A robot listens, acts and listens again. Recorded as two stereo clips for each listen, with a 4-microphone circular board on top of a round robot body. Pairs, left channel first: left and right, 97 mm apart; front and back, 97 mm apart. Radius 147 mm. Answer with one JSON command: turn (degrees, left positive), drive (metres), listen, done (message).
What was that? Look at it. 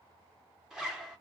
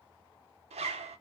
{"turn": -175}
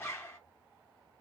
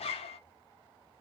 {"turn": 25}
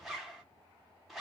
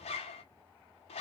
{"done": "Found it: a zipper, straight ahead."}